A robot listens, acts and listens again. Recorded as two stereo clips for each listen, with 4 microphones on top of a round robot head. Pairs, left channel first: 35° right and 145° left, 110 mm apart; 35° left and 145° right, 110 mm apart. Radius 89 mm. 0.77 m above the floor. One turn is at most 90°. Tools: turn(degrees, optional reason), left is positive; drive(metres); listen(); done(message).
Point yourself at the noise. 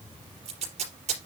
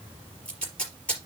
turn(degrees=90, reason="The tape being pulled: 115° left.")
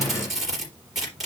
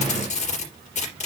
turn(degrees=55, reason="The tape being pulled is now 55° left.")
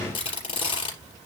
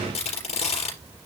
turn(degrees=10, reason="The tape being pulled is now 10° left.")
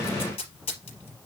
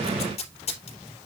done("Facing the tape being pulled, 2 to 4 m away.")